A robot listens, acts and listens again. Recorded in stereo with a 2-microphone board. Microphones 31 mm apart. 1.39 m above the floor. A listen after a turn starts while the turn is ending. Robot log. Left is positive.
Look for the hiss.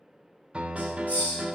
note: The hiss: about 60° left or 120° left.
cmd yaw +60
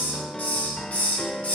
note: So it is at 60° left.
cmd yaw +60
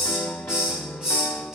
note: The hiss is now 20° right.
cmd yaw -20
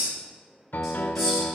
cmd idle
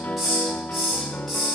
end: Found it: a hiss, straight ahead.